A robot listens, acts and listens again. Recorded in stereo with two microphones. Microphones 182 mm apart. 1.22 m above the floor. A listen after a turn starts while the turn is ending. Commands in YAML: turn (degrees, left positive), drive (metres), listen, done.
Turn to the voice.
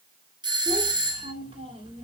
turn: -30
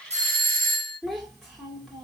done: "Facing the child speaking."